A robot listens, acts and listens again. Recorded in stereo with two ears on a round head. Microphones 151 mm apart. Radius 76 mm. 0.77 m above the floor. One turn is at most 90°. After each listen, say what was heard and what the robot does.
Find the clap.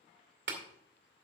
Turn 90° right.
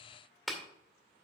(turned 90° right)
Facing the clap.